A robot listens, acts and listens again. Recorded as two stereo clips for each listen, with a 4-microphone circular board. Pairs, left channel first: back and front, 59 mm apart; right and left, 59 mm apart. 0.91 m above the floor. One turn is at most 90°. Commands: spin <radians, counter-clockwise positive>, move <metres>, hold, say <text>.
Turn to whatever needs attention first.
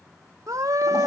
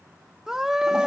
spin 0.17
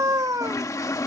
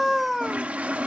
say Found it: a scream, straight ahead.